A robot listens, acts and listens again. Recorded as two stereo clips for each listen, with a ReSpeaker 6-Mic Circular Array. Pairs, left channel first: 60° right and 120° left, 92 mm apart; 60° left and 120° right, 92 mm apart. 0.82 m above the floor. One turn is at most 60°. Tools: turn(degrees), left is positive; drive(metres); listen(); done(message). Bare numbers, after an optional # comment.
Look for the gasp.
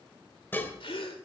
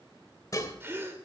# The gasp: 55° right.
turn(-55)
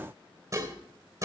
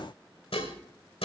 done("I heard a gasp from this way, but can't make it out now.")